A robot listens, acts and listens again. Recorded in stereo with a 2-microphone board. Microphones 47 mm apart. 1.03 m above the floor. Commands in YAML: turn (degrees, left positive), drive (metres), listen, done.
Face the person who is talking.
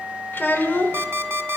turn: 45
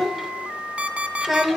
done: "Facing the child speaking."